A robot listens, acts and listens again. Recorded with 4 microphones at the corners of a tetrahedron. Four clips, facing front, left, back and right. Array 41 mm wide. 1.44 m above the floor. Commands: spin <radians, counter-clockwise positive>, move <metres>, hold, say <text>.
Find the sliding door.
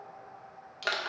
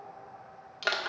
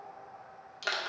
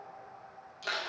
hold
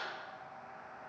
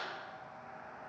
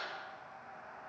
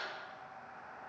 hold
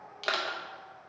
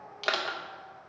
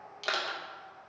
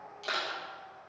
say I can't make out a sliding door to turn to.